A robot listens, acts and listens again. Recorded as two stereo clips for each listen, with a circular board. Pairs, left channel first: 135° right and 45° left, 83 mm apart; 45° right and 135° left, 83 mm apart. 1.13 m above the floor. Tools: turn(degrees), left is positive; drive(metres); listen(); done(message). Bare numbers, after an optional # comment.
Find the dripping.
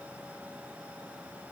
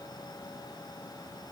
listen()
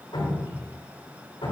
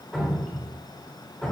# The dripping: 135° right.
turn(-135)
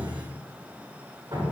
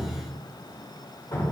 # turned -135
done("Found it: dripping, straight ahead.")